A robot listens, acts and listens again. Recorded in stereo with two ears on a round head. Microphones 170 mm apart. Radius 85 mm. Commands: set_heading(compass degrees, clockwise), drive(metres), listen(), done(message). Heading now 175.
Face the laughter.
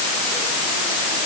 listen()
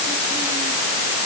listen()
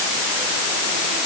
done("I can't make out laughter to turn to.")